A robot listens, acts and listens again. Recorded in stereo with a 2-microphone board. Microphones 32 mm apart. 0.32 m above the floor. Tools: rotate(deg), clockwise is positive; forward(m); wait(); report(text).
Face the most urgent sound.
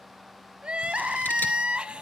rotate(35)
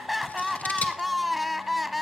report("Found it: crying, straight ahead, under 1 m away.")